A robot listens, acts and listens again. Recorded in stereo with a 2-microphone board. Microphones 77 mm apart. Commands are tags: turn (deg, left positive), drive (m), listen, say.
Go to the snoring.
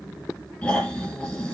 <turn deg="30"/>
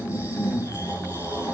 <turn deg="145"/>
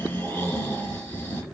<turn deg="35"/>
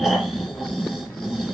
<drive m="1.0"/>
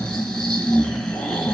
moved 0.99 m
<turn deg="15"/>
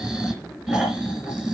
<drive m="1.0"/>
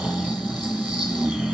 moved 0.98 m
<drive m="1.0"/>
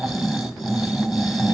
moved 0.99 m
<drive m="1.0"/>
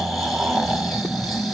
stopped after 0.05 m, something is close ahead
<say>Arrived at the snoring, straight ahead.</say>